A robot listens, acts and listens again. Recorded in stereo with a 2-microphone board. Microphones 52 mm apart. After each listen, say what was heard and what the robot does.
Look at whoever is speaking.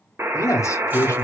Turn 90° left.
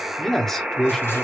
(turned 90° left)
So it is at 10° left. Turn 10° left.
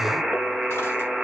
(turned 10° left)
Keep listening.
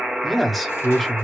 Found it: a man speaking, straight ahead.